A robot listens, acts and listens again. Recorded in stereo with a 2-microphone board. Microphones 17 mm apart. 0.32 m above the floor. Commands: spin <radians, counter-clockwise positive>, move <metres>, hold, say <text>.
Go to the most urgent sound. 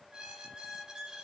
hold
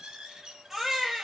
spin -0.35
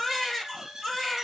move 1.0
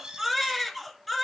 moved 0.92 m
spin 0.17
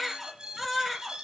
move 1.0
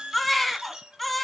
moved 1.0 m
spin 0.26
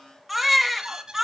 move 1.0
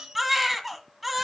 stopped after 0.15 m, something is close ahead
say I am next to the baby crying.